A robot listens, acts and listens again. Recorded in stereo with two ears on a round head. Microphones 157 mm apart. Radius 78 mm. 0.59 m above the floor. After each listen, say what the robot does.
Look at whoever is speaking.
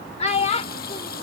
Turn 35° left.
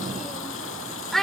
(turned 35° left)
Facing the child speaking.